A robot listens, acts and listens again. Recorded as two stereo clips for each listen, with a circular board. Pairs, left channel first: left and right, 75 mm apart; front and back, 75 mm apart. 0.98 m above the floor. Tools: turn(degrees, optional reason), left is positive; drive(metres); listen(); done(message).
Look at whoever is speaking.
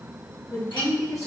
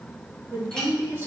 turn(degrees=125, reason="The woman speaking: 125° left.")
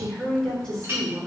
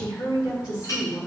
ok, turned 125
turn(degrees=10, reason="The woman speaking is now 10° left.")
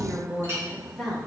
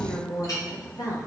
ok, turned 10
done("Facing the woman speaking.")